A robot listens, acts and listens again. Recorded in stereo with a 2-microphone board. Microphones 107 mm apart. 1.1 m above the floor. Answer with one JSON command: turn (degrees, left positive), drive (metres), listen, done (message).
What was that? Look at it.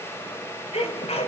{"turn": 90}
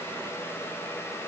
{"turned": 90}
{"done": "Facing where the sneeze came from. I can't hear it now."}